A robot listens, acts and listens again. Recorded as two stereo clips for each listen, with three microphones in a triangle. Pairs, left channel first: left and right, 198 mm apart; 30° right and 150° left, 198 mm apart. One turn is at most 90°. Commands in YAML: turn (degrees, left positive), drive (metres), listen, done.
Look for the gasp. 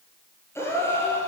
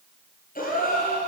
turn: 15
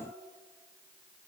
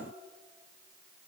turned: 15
done: "I heard a gasp from this way, but can't make it out now."